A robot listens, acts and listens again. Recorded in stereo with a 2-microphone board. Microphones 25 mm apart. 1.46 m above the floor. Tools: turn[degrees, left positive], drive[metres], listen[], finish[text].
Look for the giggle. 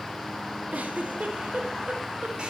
Thought: The giggle: about 75° right or 105° right.
Action: turn[-75]
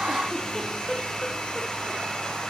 Action: listen[]
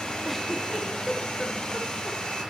Action: finish[Found it: a giggle, straight ahead, under 1 m away.]